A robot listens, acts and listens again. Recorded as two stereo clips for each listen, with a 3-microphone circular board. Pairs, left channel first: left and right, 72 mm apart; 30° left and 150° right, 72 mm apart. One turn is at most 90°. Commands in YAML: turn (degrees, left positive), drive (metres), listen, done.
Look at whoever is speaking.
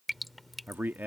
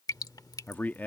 turn: -30
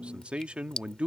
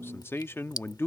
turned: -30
turn: -20
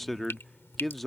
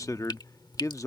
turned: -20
done: "Facing the man speaking."